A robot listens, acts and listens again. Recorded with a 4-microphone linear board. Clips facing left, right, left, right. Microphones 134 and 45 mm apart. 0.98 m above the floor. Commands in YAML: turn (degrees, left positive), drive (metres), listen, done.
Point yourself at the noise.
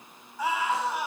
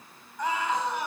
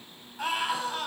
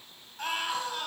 turn: 30
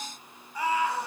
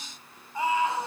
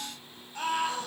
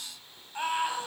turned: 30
turn: -25
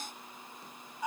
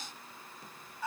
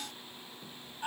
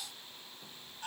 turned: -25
turn: 15
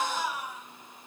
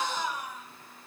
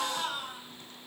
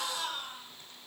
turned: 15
done: "Facing the scream."